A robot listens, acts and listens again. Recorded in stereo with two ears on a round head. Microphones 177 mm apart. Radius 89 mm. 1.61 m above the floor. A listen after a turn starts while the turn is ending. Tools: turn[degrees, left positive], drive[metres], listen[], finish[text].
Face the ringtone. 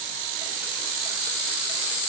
Action: listen[]
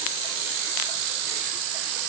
Action: listen[]
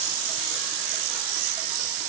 Action: finish[I can't make out a ringtone.]